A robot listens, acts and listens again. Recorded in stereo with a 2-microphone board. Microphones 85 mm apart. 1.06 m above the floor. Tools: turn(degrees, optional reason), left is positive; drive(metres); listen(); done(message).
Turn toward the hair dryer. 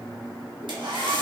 turn(degrees=-65, reason="The hair dryer: about 65° right or 115° right.")
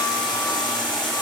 listen()
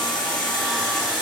listen()
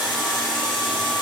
done("I heard a hair dryer, but can't make it out now. It was about straight ahead or 50° right.")